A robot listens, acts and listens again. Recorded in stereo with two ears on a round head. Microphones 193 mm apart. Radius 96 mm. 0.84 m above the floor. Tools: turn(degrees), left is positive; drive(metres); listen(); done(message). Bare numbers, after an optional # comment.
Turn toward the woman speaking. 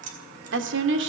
# The woman speaking: about 60° right or 120° right.
turn(-60)
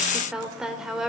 done("Found it: a woman speaking, straight ahead.")